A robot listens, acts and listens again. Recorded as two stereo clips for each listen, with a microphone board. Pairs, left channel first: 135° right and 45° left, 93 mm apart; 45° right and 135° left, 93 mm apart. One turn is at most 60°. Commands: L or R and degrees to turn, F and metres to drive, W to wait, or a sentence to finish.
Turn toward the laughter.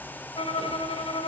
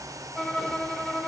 W
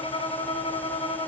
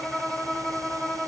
W
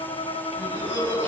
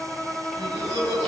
L60
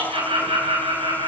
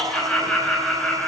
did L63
L40
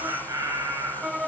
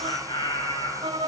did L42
Found it: laughter, straight ahead.